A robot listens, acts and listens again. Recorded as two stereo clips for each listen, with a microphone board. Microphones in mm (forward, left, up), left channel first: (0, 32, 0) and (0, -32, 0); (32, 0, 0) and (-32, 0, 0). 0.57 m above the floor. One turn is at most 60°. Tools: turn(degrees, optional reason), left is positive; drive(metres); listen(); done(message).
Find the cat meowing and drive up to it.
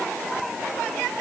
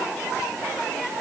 listen()
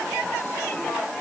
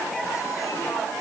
listen()
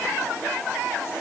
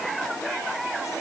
done("I can't make out a cat meowing.")